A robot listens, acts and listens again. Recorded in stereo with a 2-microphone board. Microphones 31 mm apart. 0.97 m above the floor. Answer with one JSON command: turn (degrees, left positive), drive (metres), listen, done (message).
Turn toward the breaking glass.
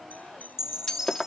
{"turn": 25}
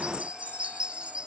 {"listen": true}
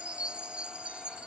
{"done": "I heard breaking glass, but can't make it out now. It was about straight ahead or 130° left."}